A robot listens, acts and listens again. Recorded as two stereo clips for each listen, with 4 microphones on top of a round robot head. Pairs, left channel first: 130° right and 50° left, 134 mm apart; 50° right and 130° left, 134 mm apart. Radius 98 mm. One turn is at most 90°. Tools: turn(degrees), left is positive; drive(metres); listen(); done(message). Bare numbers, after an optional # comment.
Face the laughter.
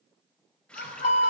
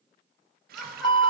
# The laughter: 135° right.
turn(-90)
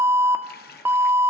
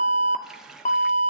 # Nothing new. It was at 45° right.
turn(-45)
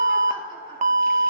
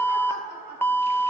# The laughter is now 10° right.
turn(-10)
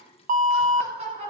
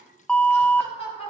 done("Facing the laughter, over 4 m away.")